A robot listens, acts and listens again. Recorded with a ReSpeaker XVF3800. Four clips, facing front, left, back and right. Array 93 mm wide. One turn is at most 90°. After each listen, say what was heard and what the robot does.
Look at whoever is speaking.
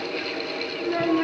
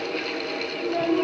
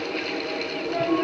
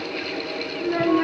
The child speaking: 60° right. Turn 60° right.
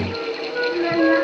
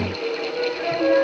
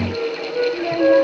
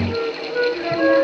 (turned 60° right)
The child speaking is now 20° right. Turn 20° right.
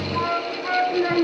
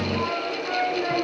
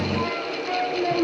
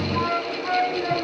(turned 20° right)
Facing the child speaking, 2 to 4 m away.